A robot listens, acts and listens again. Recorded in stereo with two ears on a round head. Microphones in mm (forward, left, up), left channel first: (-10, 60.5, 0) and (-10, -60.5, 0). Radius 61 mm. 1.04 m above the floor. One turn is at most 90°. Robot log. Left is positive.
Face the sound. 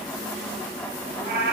cmd yaw -90
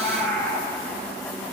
note: So it is at 15° left.
cmd yaw +15
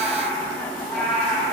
end: Found it: a cat meowing, straight ahead, over 4 m away.